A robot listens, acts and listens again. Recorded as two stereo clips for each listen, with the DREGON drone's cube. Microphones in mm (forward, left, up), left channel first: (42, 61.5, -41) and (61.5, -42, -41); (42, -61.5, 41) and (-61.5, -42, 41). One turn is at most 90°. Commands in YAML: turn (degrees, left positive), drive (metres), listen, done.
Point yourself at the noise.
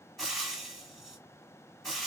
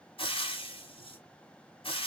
turn: 15
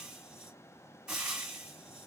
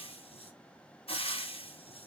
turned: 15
done: "Facing the frying."